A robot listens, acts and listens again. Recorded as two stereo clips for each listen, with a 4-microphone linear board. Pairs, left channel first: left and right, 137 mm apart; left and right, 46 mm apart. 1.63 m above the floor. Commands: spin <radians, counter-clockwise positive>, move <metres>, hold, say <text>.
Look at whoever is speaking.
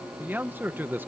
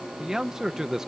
spin -0.52
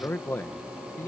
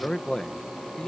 spin 0.26
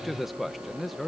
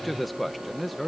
say Facing the man speaking.